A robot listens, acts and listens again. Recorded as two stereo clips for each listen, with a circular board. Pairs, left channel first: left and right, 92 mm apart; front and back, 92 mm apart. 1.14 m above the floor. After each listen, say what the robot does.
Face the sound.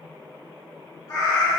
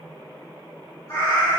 Turn 50° left.
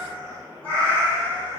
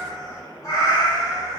Turn 30° left.
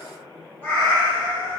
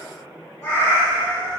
Turn 50° left.
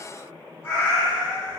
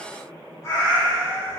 Turn 45° left.
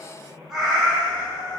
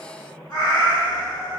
Facing the cat meowing.